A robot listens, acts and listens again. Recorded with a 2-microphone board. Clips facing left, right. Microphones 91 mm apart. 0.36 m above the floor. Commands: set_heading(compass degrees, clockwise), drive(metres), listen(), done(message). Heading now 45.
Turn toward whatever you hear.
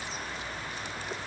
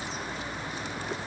listen()
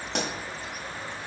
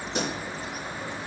set_heading(335)
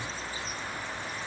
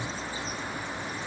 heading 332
listen()
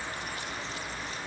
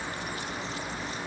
done("I heard a pop, but can't make it out now. It was about 5° right or 40° left.")